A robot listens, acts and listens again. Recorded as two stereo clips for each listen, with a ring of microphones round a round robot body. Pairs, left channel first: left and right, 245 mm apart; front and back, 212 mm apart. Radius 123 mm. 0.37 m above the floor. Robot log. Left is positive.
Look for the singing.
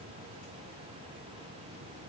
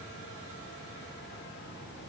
cmd idle
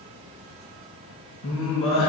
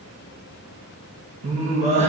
note: The singing: 120° left.
cmd yaw +120
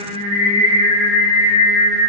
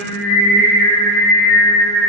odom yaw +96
note: The singing is now 15° left.
cmd yaw +15
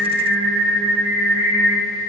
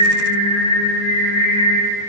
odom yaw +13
end: Found it: singing, straight ahead, 2 to 4 m away.